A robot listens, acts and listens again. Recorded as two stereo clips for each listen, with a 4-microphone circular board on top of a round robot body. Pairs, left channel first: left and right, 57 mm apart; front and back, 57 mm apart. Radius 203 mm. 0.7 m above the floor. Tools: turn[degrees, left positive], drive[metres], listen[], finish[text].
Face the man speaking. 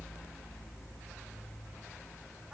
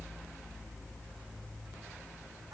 Action: listen[]
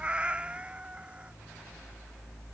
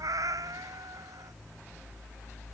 Action: listen[]
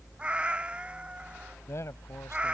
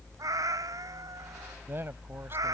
Thought: The man speaking: 130° left.
Action: turn[130]
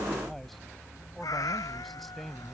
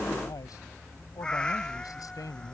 Action: finish[Found it: a man speaking, straight ahead.]